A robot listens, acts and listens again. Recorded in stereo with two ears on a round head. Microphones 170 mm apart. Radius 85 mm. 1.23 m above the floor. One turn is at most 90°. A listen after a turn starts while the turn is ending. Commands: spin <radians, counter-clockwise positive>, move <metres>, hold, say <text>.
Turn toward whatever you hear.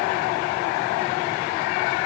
hold
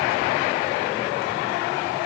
hold
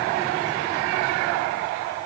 say I can't make out anything.